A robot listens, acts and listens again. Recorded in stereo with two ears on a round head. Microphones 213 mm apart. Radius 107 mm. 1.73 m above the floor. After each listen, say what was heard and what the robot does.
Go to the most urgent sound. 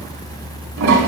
Keep listening.
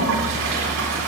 Keep listening.
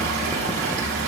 I can't make out anything urgent to turn to.